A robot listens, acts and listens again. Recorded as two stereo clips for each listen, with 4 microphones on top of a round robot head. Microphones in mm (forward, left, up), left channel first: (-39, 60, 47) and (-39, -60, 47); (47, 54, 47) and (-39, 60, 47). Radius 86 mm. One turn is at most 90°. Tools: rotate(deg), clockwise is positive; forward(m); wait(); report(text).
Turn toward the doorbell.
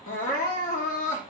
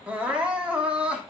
wait()
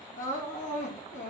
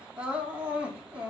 wait()
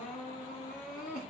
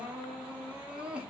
report("I can't make out a doorbell to turn to.")